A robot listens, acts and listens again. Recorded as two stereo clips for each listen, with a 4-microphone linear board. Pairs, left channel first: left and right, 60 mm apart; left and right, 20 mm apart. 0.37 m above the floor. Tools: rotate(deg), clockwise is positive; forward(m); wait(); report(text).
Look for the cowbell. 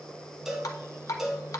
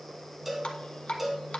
rotate(30)
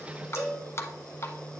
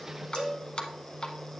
rotate(140)
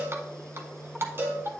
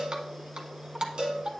rotate(40)
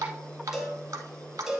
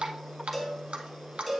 report("Found it: a cowbell, straight ahead.")